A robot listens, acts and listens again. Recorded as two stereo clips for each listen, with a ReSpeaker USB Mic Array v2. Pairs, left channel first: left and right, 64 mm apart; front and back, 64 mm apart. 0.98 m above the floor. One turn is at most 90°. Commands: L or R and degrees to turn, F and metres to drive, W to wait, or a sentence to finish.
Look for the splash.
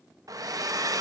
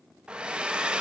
W
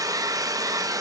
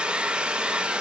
W
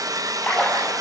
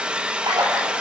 L90
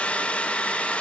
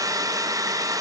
L75
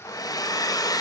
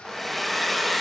Facing where the splash came from. I can't hear it now.